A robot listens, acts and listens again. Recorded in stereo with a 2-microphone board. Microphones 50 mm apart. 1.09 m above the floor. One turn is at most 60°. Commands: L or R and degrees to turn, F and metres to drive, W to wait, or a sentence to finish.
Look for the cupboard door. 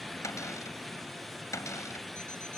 L60
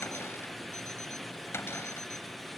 L50
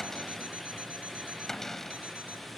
L10
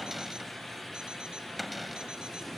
Facing the cupboard door.